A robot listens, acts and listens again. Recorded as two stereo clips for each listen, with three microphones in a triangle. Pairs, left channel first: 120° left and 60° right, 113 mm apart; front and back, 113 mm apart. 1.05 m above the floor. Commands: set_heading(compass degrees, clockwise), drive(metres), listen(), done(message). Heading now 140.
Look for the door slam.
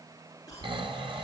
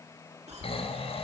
listen()
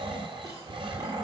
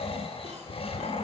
listen()
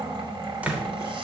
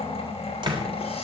set_heading(280)
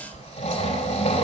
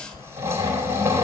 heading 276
done("I heard a door slam from this way, but can't make it out now.")